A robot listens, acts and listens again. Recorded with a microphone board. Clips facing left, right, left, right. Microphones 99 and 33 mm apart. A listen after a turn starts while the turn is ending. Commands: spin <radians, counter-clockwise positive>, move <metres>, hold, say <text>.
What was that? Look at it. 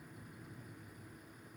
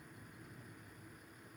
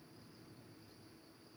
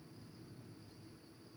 hold
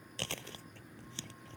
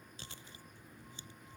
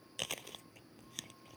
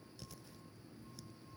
spin 1.57
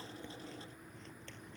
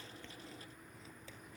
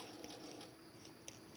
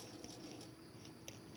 hold
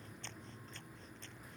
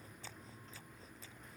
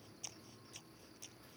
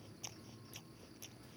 say Found it: chewing, straight ahead.